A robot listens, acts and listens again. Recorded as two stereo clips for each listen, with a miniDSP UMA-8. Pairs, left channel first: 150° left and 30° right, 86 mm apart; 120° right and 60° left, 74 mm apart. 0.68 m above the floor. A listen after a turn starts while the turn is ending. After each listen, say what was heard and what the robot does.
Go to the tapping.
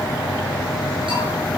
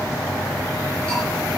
Keep listening.
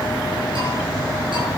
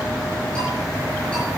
Keep listening.
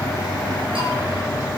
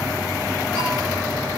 I can't make out tapping.